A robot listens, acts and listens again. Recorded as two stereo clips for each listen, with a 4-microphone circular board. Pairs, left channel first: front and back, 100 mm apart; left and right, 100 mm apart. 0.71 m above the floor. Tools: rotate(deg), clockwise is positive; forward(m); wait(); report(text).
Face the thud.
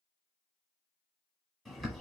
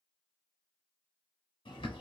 wait()
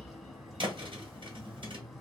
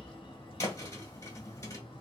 rotate(-150)
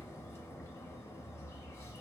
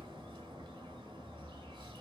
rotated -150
report("I heard a thud from this way, but can't make it out now.")